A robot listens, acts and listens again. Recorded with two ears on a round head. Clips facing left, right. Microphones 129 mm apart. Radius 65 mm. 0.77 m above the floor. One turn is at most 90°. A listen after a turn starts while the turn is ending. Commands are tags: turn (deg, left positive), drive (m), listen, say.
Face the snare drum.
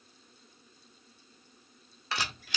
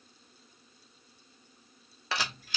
<listen/>
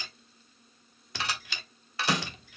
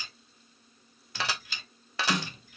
<turn deg="65"/>
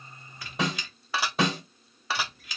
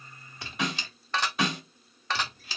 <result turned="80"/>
<turn deg="30"/>
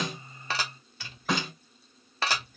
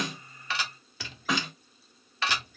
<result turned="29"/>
<say>Found it: a snare drum, straight ahead.</say>